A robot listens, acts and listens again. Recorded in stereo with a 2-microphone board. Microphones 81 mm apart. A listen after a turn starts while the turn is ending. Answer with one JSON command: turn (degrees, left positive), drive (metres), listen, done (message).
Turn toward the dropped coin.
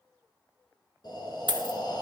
{"turn": -70}
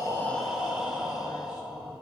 {"listen": true}
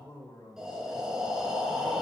{"done": "I heard a dropped coin, but can't make it out now. It was about straight ahead or 40° right."}